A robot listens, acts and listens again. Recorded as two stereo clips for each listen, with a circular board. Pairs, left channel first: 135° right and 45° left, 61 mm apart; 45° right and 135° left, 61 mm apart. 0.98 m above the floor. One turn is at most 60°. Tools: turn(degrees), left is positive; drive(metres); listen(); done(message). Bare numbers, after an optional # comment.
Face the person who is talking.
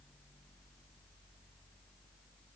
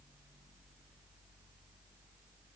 listen()
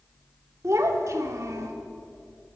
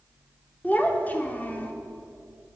# The child speaking: 15° left.
turn(15)
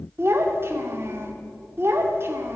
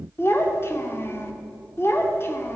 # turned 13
done("Facing the child speaking, 2 to 4 m away.")